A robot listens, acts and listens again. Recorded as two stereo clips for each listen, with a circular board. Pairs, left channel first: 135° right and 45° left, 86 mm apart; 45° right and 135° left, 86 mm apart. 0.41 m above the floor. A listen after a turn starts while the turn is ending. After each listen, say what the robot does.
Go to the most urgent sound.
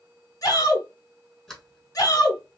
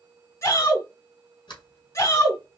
Turn 95° right.
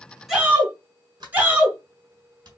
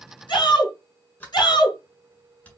Turn 25° right.
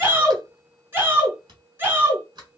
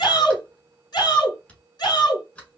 Turn 20° right.
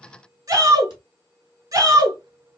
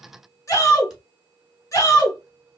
Drive 1.0 m forward.
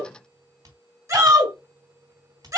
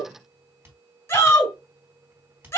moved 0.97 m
Drive 1.0 m forward.
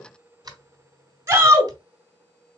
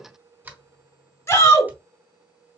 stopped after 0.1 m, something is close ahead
Arrived at the shout, straight ahead.